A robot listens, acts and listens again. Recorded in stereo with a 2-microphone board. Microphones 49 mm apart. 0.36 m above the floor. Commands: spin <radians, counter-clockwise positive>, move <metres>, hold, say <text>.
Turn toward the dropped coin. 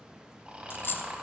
spin 0.87
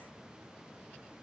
hold
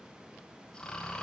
say I heard a dropped coin, but can't make it out now. It was about straight ahead or 80° left.